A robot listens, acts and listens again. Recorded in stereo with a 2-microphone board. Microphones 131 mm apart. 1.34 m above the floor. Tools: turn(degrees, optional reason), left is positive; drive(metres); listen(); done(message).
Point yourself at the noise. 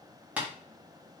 turn(degrees=-30)
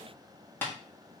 turn(degrees=15, reason="So it is at 15° left.")
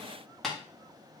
done("Facing the tapping.")